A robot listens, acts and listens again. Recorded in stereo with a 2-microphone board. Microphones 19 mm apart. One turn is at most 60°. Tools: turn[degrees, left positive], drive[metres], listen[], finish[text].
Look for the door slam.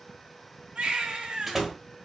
Action: turn[-30]
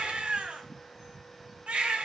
Action: listen[]
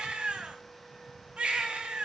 Action: finish[I heard a door slam, but can't make it out now. It was about 15° left or 135° right.]